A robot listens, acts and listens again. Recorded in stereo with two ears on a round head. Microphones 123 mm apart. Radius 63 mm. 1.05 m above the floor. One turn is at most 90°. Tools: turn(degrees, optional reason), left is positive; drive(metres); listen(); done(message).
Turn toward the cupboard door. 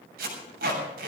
listen()
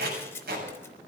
listen()
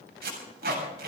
done("I can't make out a cupboard door, only tape being pulled.")